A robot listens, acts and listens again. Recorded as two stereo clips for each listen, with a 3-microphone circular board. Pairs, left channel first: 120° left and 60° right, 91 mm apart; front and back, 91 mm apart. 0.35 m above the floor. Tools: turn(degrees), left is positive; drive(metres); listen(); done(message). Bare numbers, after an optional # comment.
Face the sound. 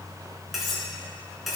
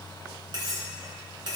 # The cutlery clinking: 150° right.
turn(-150)
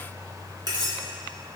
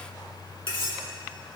# The cutlery clinking is now 20° right.
turn(-20)
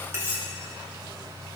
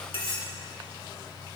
done("Facing the cutlery clinking.")